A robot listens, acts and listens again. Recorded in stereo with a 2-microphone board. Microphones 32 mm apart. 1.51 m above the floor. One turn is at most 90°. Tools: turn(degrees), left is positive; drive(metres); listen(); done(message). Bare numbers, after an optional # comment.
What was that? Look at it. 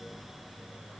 listen()
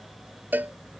# The cowbell: about 70° right or 110° right.
turn(-70)
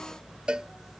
# So it is at 30° right.
turn(-30)
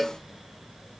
done("Facing the cowbell.")